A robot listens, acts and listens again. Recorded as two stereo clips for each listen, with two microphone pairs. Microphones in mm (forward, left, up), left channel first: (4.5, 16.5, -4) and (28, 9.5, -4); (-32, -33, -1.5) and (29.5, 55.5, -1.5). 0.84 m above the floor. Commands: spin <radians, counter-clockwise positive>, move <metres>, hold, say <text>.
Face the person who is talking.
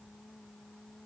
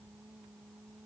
hold
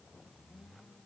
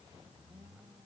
hold
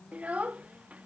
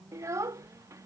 say Facing the child speaking.